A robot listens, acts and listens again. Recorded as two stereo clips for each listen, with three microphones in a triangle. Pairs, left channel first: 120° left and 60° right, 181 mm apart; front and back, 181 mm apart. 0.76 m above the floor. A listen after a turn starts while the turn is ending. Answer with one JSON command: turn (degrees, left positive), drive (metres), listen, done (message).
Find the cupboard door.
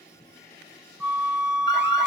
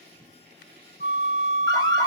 {"listen": true}
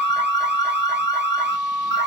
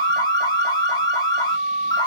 {"listen": true}
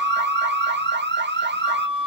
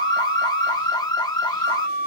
{"done": "I can't make out a cupboard door, only an alarm and a flute."}